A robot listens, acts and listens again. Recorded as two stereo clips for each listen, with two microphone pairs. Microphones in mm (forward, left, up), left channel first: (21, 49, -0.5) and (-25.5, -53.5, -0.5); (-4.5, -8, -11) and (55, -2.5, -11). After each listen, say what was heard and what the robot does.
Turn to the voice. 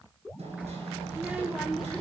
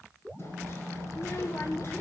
The child speaking: 155° left. Turn 155° left.
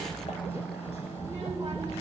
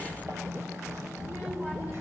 The child speaking is now 65° right. Turn 65° right.
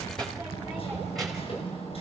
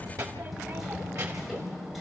The child speaking is now 25° right. Turn 25° right.
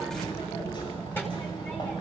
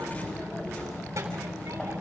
Facing the child speaking, 2 to 4 m away.